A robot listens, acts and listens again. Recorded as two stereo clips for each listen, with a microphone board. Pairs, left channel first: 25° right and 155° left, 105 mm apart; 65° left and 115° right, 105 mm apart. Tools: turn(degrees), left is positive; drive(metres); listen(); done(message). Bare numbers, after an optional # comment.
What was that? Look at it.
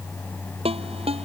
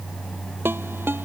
# The ringtone: straight behind.
turn(180)
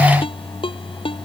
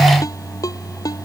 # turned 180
# The ringtone is now 10° left.
turn(10)
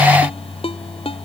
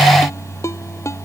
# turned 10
done("Found it: a ringtone, straight ahead.")